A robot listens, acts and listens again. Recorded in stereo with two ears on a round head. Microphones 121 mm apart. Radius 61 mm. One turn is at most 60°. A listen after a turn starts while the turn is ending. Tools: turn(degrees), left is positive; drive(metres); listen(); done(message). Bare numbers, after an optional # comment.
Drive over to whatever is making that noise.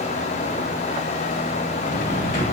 # The drawer: about 60° left or 120° left.
turn(60)
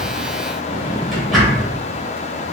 drive(1.0)
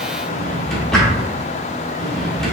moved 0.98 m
drive(1.0)
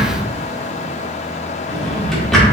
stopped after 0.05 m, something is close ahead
done("I am next to the drawer.")